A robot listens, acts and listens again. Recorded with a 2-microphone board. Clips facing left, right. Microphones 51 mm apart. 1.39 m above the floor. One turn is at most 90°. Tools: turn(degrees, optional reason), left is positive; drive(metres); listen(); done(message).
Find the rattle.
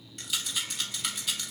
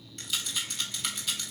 turn(degrees=30)
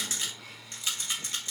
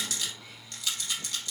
turn(degrees=90, reason="So it is at 150° left.")
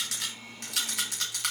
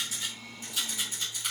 turn(degrees=75, reason="The rattle is now 75° left.")
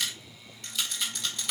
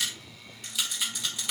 done("Found it: a rattle, straight ahead, 2 to 4 m away.")